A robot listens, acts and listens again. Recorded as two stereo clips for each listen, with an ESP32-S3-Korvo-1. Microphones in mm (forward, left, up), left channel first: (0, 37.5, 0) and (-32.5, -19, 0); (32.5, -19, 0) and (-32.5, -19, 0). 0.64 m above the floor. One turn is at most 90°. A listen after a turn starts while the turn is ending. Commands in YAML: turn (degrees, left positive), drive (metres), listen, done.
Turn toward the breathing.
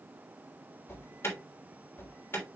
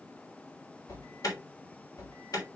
listen: true
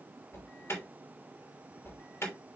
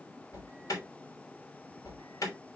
listen: true
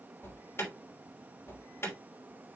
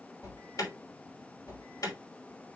done: "I can't make out breathing to turn to."